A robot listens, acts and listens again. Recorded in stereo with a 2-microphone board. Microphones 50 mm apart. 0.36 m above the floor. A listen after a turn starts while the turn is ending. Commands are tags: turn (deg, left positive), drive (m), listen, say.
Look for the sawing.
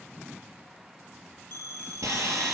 <turn deg="-90"/>
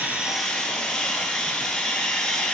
<turn deg="10"/>
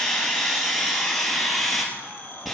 <say>Facing the sawing.</say>